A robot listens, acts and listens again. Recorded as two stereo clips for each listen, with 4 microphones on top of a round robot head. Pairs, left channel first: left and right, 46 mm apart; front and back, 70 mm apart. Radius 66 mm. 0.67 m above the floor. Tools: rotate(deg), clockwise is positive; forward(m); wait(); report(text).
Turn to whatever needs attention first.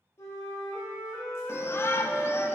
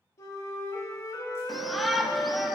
rotate(-90)
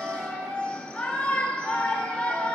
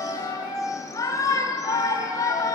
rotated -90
rotate(-25)
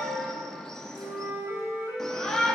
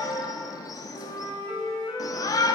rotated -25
rotate(-15)
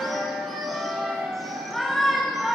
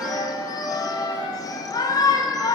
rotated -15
report("Facing the shout.")